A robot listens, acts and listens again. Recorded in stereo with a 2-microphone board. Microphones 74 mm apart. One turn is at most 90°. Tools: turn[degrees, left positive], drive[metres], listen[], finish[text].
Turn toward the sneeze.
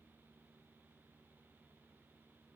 Action: listen[]
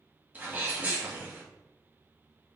Thought: The sneeze: about 25° right or 155° right.
Action: turn[-25]
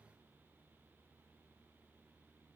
Action: listen[]
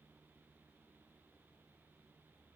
Action: finish[I heard a sneeze, but can't make it out now. It was about straight ahead or 130° right.]